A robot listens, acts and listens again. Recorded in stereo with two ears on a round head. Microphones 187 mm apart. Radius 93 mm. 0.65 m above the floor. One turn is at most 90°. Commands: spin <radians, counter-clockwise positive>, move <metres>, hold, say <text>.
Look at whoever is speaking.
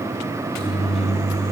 hold
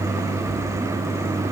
hold
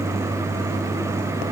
say I can't make out anyone speaking, only a microwave.